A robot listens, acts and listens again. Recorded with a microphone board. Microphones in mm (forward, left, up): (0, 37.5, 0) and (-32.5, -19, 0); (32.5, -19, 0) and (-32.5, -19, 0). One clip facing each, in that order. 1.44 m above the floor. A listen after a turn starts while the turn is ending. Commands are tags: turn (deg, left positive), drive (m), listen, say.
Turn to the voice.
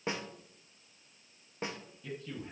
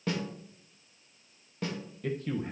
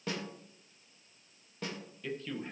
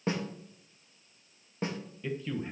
<turn deg="-100"/>
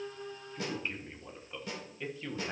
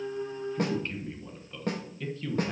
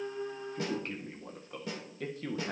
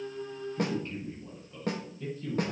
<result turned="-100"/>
<turn deg="-15"/>
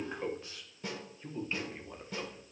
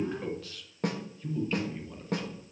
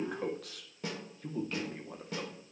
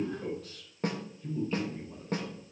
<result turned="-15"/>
<say>Facing the man speaking.</say>